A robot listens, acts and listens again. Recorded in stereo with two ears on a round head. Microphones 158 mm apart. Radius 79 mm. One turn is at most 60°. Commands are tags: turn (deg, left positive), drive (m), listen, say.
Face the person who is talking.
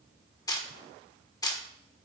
<listen/>
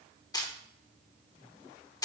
<listen/>
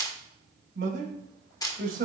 <turn deg="-55"/>
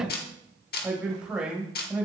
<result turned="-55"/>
<say>Facing the man speaking, 2 to 4 m away.</say>